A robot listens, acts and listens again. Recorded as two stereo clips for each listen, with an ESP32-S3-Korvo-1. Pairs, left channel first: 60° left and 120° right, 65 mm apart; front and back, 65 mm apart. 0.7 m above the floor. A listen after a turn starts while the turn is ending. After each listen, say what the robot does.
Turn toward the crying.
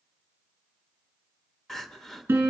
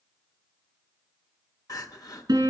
Turn 25° right.
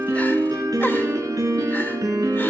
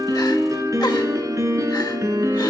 Keep listening.
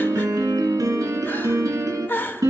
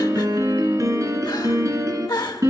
Found it: crying, straight ahead, under 1 m away.